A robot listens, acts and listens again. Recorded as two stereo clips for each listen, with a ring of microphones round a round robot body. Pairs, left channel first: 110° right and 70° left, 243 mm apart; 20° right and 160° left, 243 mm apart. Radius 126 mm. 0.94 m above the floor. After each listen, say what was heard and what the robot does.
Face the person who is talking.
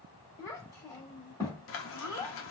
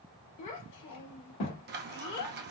The child speaking: 40° right. Turn 40° right.
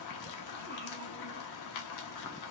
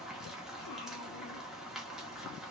Keep listening.
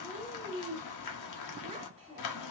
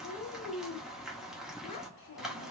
Facing the child speaking, 1 to 2 m away.